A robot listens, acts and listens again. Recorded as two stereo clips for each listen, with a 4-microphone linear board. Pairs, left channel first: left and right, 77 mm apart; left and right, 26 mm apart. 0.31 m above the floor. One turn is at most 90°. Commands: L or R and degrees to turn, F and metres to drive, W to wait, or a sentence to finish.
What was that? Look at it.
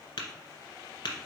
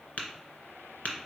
L90
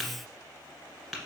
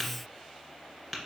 Found it: tapping, straight ahead.